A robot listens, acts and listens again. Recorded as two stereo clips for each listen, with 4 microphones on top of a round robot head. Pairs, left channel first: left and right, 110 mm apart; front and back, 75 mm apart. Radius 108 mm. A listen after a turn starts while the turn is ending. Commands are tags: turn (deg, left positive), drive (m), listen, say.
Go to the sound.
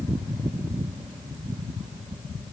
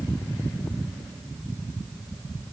<listen/>
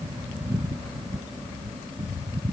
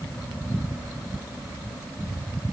<listen/>
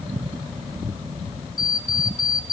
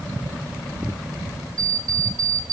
<turn deg="140"/>
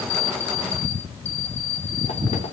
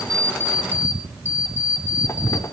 <turn deg="50"/>
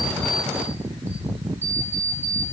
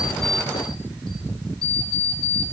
<turn deg="-15"/>
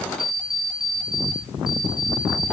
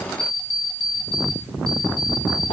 <drive m="1.0"/>
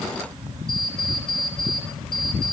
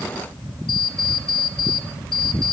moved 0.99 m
<drive m="1.0"/>
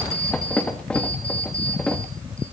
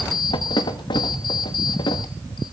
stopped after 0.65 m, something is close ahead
<say>Arrived at the alarm clock, straight ahead.</say>